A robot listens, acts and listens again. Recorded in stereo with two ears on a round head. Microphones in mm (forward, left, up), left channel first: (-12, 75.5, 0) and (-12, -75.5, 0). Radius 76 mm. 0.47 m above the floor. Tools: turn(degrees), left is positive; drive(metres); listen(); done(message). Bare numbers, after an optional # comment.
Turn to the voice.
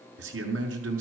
turn(-90)
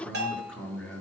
done("Facing the man speaking.")